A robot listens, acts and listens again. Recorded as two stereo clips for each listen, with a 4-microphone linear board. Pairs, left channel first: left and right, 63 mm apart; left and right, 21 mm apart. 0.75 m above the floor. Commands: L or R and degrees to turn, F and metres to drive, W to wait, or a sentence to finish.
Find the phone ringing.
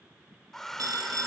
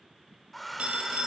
R90
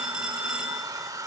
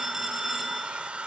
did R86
R15
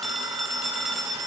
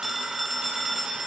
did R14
Found it: a phone ringing, straight ahead, 2 to 4 m away.